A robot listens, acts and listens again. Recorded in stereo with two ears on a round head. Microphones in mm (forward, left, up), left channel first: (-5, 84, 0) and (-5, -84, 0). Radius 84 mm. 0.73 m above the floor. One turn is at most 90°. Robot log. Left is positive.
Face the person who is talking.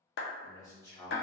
note: The man speaking: about 20° left or 160° left.
cmd yaw +20
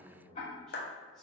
end: Facing the man speaking, 1 to 2 m away.